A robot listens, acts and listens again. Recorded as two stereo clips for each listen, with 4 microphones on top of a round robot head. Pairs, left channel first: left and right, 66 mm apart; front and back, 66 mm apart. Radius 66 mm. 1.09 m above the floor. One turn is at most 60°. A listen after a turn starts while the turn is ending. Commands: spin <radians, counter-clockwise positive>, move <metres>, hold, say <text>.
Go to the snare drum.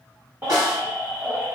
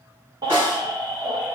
spin -1.05
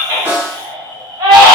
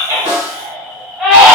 hold
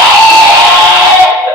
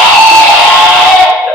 hold
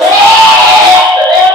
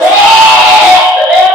say Facing where the snare drum came from. I can't hear it now. I did not reach it.